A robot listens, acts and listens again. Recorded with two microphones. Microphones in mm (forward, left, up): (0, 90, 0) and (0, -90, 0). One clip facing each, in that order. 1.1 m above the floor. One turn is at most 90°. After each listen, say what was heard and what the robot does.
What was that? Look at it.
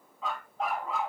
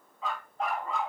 Turn 30° left.
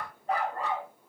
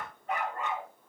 So it is at 145° left. Turn 90° left.
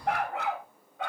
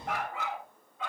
The dog barking is now 70° left. Turn 70° left.
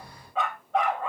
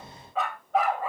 Facing the dog barking.